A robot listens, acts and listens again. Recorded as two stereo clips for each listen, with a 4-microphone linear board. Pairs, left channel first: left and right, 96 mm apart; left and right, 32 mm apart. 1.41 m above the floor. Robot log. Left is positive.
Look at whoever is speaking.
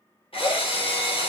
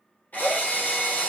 cmd idle
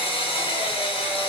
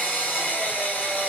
cmd idle
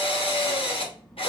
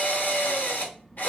cmd yaw +30
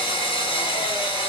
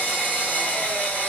cmd idle
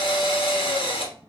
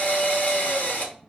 note: So it is at 25° right.
cmd yaw -25
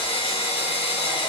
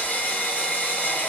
cmd idle
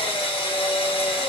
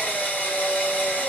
cmd idle
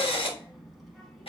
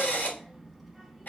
end: Facing the child speaking.